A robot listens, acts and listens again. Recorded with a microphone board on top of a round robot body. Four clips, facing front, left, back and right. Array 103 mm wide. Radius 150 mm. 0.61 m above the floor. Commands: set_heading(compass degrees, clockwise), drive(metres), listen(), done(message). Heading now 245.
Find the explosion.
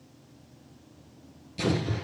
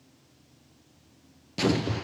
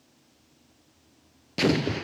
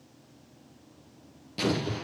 set_heading(75)
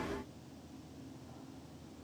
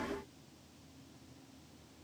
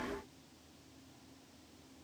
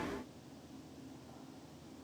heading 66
set_heading(76)
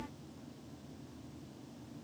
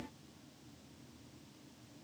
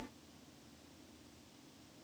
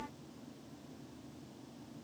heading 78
done("I heard an explosion from this way, but can't make it out now.")